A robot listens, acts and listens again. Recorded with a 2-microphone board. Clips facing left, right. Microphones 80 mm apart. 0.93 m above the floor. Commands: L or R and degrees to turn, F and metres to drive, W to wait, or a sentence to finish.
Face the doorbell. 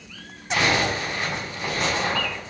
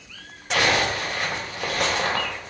W
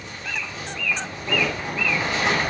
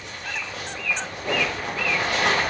W
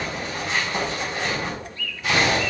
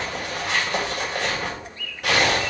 I can't make out a doorbell to turn to.